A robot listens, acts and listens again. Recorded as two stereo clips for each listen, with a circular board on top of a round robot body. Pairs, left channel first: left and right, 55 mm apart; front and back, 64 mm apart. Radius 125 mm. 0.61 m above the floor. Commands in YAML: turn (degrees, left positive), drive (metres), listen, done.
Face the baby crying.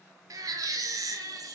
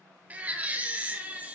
turn: -110
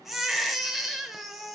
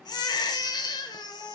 done: "Found it: a baby crying, straight ahead."